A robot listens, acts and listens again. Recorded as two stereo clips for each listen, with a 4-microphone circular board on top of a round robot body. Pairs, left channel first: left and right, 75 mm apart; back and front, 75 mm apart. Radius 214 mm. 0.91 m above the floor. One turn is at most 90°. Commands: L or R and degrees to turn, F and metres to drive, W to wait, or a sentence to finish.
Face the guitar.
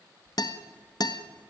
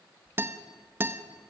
L60
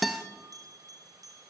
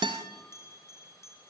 Facing the guitar.